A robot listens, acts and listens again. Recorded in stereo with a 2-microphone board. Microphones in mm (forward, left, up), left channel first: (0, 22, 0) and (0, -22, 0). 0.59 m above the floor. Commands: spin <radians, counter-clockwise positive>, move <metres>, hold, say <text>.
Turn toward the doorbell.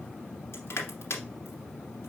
hold
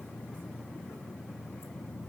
hold
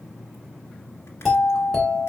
spin 0.52
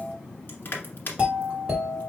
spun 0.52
spin -0.52
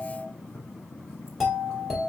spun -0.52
say Found it: a doorbell, straight ahead.